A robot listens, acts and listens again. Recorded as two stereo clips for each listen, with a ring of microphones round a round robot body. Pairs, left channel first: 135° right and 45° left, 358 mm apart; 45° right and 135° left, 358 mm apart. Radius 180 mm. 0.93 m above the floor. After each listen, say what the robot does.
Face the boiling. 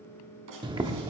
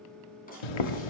Turn 35° right.
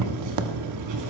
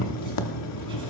Found it: boiling, straight ahead, 1 to 2 m away.